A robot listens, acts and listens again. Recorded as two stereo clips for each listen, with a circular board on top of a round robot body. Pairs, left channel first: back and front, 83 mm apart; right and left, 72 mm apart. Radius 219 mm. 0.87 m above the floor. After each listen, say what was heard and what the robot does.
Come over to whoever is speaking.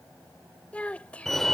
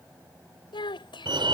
The child speaking: 105° right. Turn 105° right.
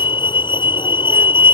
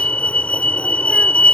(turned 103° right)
Keep listening.
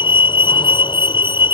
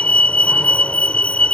Keep listening.
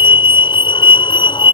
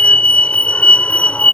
Facing where the child speaking came from. I can't hear it now. I did not reach it.